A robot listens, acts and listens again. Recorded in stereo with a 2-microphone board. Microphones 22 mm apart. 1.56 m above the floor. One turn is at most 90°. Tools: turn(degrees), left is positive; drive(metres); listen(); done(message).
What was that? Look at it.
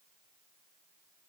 listen()
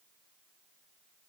listen()
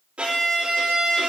turn(degrees=-70)
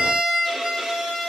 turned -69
turn(degrees=-40)
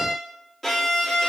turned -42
done("Facing the violin, 2 to 4 m away.")